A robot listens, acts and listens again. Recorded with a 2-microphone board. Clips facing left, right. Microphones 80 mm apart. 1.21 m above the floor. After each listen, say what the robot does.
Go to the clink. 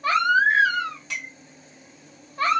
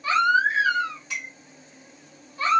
Turn 90° left.
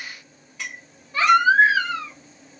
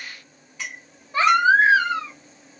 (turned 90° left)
Drive 1.0 m forward.
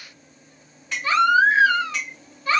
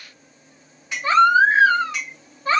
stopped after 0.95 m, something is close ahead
I am next to the clink.